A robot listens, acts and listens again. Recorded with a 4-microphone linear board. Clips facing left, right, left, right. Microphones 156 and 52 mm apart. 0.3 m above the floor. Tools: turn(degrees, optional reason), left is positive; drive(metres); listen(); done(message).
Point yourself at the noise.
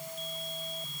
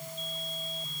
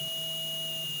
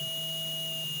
listen()
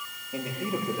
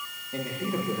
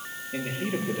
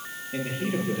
turn(degrees=30)
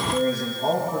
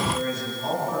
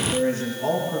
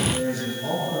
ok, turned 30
turn(degrees=145, reason="So it is at 145° left.")
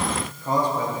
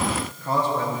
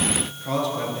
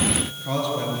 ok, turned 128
turn(degrees=10, reason="The man speaking is now 10° left.")
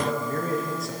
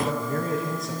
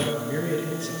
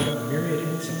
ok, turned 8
done("Found it: a man speaking, straight ahead.")